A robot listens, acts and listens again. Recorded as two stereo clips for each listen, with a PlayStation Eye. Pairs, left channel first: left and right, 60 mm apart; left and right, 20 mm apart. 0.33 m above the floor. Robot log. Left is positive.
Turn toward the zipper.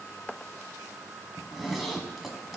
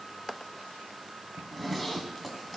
cmd yaw +30
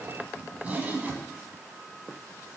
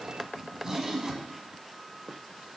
note: So it is at 30° right.
cmd yaw -30
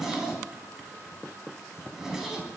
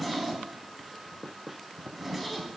note: The zipper is now 10° right.
cmd yaw -10
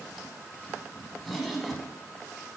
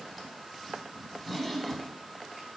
end: Facing the zipper, under 1 m away.